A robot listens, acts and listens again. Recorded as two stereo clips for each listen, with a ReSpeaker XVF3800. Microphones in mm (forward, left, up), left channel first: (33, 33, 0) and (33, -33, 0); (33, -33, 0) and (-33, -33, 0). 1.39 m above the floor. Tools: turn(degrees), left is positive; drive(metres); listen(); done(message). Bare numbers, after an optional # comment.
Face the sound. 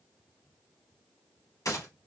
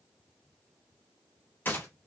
# The gunshot: 60° left.
turn(60)
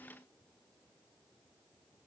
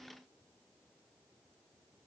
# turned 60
done("I heard a gunshot from this way, but can't make it out now.")